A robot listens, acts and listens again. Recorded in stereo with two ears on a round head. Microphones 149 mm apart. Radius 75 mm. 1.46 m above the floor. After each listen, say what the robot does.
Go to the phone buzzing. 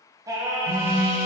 Turn 70° left.
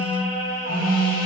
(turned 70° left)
Turn 40° left.
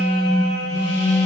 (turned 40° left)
Turn 20° left.
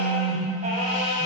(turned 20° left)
Drive 1.0 m forward.
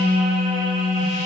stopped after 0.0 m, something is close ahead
Blocked. The phone buzzing is further on, straight ahead.